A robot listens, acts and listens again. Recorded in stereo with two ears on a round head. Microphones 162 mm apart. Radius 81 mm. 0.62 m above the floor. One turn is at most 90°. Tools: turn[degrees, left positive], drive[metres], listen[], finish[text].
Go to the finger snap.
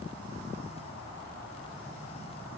Action: listen[]
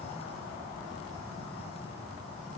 Action: listen[]
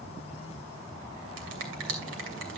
Thought: The finger snap: about 75° right or 105° right.
Action: turn[-75]
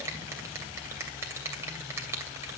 Thought: So it is at 15° right.
Action: turn[-15]
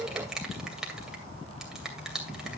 Action: drive[1.0]
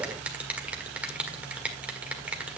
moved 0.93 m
Action: drive[1.0]
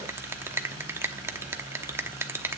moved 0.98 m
Thought: The finger snap is now 20° right.
Action: turn[-20]
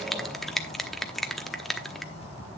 Action: drive[1.0]
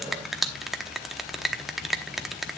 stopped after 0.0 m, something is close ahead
Action: finish[Arrived at the finger snap, straight ahead.]